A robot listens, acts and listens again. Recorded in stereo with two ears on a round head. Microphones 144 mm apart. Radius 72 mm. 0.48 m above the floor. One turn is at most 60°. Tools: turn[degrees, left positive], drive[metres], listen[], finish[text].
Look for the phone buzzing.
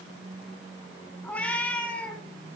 Action: listen[]
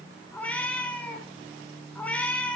Action: listen[]
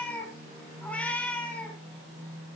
Action: finish[I can't make out a phone buzzing to turn to.]